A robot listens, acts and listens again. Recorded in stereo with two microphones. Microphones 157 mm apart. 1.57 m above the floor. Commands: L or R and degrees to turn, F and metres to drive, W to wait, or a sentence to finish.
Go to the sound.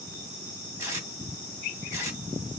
R20
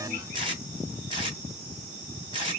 R140
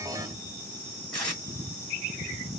F1.0
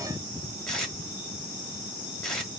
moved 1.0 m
F1.0
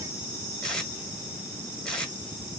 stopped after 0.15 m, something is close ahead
Arrived at the tape being pulled, straight ahead.